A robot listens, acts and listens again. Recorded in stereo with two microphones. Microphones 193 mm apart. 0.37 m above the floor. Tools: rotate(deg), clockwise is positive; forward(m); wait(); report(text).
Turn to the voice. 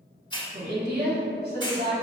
rotate(60)
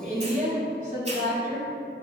rotate(50)
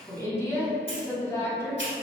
rotate(-15)
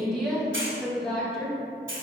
report("Found it: a woman speaking, straight ahead, 1 to 2 m away.")